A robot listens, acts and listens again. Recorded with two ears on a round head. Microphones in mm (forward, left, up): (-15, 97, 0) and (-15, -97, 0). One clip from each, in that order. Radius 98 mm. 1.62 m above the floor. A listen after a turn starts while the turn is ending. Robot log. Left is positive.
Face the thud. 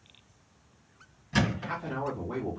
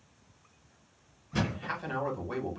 note: The thud: about 55° left or 125° left.
cmd yaw +55
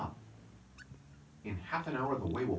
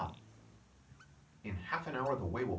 cmd idle
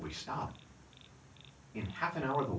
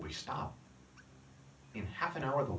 end: I heard a thud, but can't make it out now. It was about straight ahead or 70° left.